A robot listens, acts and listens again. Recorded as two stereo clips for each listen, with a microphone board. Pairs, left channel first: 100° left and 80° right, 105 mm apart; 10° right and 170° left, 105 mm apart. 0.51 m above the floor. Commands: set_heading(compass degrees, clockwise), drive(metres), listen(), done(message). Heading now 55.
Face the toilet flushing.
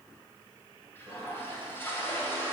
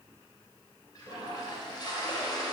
set_heading(20)
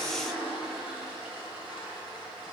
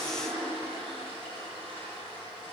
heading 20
done("Facing the toilet flushing, 2 to 4 m away.")